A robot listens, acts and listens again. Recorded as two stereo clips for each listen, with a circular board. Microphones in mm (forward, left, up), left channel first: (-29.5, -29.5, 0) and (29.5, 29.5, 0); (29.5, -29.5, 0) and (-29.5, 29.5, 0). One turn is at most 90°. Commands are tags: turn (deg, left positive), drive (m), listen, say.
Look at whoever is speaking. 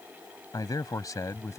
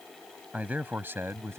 <turn deg="-90"/>
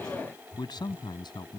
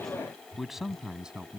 <turn deg="-90"/>
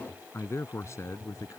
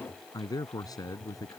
<turn deg="-85"/>
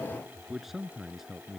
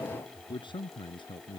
<turn deg="-40"/>
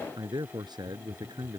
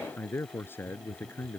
<turn deg="20"/>
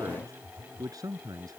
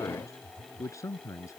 <say>Found it: a man speaking, straight ahead.</say>